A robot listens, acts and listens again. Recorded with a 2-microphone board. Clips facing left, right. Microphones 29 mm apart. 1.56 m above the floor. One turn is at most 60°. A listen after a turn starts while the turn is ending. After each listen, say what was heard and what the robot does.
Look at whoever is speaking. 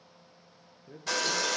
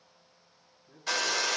The man speaking: about 70° left or 110° left. Turn 60° left.
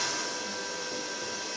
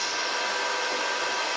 Keep listening.
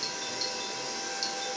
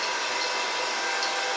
Keep listening.
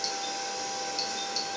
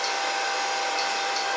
I heard a man speaking, but can't make it out now. It was about 10° left or 50° left.